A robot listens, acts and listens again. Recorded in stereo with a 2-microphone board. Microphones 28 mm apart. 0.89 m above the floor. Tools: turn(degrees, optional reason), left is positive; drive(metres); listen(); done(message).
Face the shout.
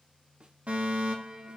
listen()
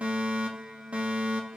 listen()
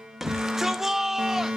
turn(degrees=-30)
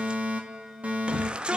turn(degrees=-140, reason="So it is at 140° right.")
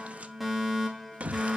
turn(degrees=-65, reason="The shout is now 65° right.")
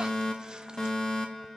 listen()
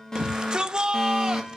turn(degrees=-30, reason="The shout is now 30° right.")
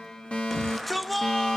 done("Facing the shout, under 1 m away.")